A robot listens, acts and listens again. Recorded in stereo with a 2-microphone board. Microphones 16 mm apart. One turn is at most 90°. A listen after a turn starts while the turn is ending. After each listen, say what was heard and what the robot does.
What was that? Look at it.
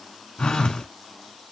The phone buzzing: about 65° left or 115° left. Turn 65° left.
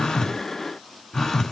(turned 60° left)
So it is at 45° left. Turn 45° left.
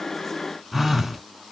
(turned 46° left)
Facing the phone buzzing.